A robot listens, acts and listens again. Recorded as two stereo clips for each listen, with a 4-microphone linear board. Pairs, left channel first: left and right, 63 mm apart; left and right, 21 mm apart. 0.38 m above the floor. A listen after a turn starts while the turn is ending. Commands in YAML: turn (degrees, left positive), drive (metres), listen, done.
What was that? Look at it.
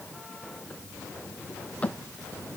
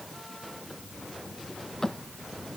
turn: 20
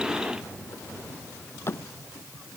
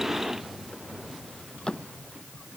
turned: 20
turn: 140
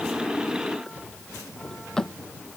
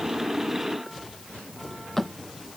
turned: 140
turn: 10
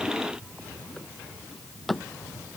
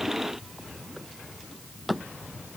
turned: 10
done: "Found it: a drawer, straight ahead."